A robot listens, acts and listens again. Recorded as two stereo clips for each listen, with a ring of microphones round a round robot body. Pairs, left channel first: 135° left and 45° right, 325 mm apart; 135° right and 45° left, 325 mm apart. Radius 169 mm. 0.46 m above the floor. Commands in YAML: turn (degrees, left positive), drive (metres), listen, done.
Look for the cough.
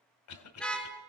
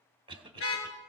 turn: 120
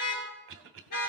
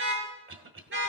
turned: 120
done: "Facing the cough."